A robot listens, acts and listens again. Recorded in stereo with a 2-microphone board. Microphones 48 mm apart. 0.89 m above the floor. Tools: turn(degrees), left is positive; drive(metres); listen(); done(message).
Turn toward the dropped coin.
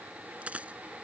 turn(degrees=-25)
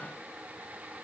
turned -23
listen()
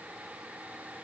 done("I heard a dropped coin, but can't make it out now. It was about 5° right or 130° right.")